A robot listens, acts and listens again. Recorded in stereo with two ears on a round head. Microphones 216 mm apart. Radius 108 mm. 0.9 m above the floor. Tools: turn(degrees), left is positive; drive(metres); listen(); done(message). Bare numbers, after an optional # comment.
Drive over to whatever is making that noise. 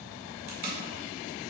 # The tape being pulled: about 35° right or 145° right.
turn(-35)
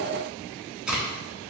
drive(1.0)
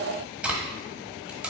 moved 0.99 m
drive(1.0)
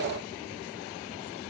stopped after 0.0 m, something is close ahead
listen()
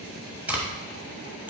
# The tape being pulled is now 10° right.
turn(-10)
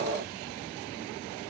listen()
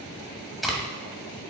done("Arrived at the tape being pulled, straight ahead.")